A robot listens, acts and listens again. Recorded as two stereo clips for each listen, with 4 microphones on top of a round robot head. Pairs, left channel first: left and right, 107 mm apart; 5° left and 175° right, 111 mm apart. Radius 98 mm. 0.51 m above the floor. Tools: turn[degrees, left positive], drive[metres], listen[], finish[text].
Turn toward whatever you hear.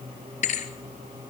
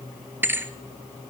Thought: The thud: 115° left.
Action: turn[115]
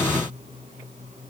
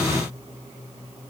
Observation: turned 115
Action: finish[Facing where the thud came from. I can't hear it now.]